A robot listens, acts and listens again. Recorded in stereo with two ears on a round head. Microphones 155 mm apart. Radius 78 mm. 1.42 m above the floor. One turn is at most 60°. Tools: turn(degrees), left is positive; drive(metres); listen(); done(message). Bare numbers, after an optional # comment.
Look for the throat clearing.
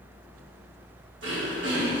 # The throat clearing: about 75° right or 105° right.
turn(-60)
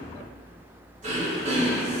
# So it is at 45° right.
turn(-45)
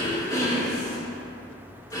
# The throat clearing is now 20° left.
turn(20)
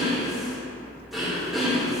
done("Found it: throat clearing, straight ahead, 2 to 4 m away.")